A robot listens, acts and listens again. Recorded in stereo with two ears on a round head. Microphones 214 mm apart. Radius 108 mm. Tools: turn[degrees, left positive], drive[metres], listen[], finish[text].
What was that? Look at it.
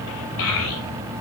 Thought: The child speaking: about 60° left or 120° left.
Action: turn[60]
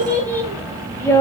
Thought: So it is at 15° left.
Action: turn[15]
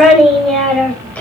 Action: finish[Facing the child speaking.]